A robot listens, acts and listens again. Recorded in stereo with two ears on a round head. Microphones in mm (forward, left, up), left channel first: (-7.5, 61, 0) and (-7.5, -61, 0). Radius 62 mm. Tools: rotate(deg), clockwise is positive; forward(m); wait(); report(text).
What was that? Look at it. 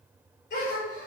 rotate(-55)
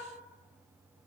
wait()
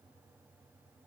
report("I heard a gasp, but can't make it out now. It was about straight ahead or 70° left.")